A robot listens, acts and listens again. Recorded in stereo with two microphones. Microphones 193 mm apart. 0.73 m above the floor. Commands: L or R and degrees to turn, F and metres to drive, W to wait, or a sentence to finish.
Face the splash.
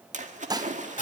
R40
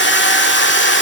W
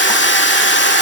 I heard a splash, but can't make it out now. It was about straight ahead or 100° right.